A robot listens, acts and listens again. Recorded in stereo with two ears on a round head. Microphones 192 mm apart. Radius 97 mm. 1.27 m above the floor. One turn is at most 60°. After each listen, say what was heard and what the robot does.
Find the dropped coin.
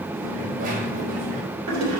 The dropped coin: about 40° right or 140° right. Turn 40° right.
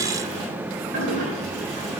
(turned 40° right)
Keep listening.
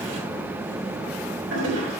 I heard a dropped coin, but can't make it out now. It was about straight ahead or 100° right.